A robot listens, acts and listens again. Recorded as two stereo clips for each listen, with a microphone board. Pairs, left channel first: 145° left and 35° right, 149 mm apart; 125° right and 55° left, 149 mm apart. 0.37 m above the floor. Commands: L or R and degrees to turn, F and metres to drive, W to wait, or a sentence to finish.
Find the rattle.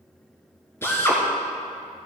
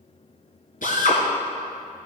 W
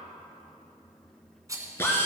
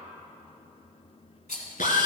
R100
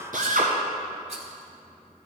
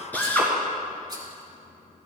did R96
W
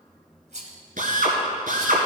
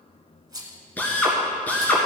Found it: a rattle, straight ahead.